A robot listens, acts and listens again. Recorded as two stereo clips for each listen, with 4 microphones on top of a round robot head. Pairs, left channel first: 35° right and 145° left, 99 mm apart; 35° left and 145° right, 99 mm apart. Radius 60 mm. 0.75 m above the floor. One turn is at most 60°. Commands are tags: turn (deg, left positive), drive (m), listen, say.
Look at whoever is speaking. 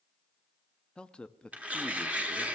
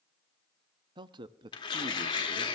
<turn deg="-60"/>
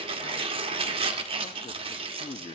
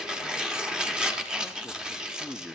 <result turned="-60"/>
<turn deg="-55"/>
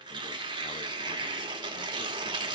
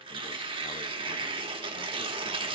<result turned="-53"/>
<listen/>
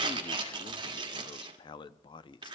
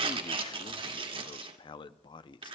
<say>Facing the man speaking, under 1 m away.</say>